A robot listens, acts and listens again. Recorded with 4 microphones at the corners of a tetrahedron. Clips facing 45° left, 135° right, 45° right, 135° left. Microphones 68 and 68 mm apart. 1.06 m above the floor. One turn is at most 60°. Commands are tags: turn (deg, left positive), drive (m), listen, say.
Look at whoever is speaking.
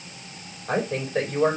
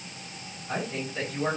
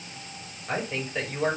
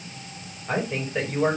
<turn deg="50"/>
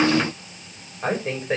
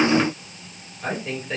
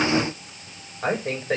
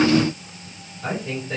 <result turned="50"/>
<turn deg="-10"/>
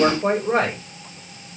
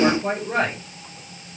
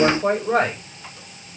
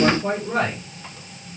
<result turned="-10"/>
<say>Found it: a woman speaking, straight ahead, over 4 m away.</say>